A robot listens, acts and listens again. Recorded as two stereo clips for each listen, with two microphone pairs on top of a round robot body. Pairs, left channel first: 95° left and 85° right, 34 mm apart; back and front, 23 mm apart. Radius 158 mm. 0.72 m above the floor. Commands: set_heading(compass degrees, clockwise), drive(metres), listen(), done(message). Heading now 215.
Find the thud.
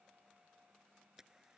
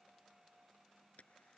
listen()
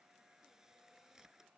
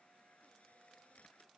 listen()
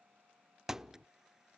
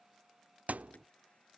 done("Found it: a thud, straight ahead.")